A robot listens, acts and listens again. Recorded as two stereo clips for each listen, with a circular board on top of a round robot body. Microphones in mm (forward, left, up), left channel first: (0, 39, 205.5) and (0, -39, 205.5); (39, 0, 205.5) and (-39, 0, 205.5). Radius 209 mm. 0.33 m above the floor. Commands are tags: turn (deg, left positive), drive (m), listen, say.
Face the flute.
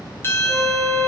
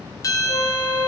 <say>Found it: a flute, straight ahead.</say>